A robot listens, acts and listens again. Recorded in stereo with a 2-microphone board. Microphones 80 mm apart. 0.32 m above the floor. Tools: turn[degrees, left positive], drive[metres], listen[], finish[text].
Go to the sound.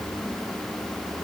Action: listen[]
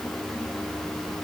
Action: listen[]
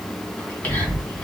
Thought: The whispering: about 20° left or 160° left.
Action: turn[20]
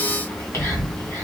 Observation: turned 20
Thought: So it is at 140° left.
Action: turn[140]
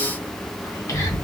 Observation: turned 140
Thought: The whispering is now 50° left.
Action: turn[50]
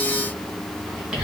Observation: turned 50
Thought: The whispering is now 15° right.
Action: turn[-15]
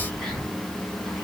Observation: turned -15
Action: drive[1.0]
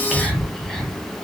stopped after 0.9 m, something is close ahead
Action: finish[I am next to the whispering.]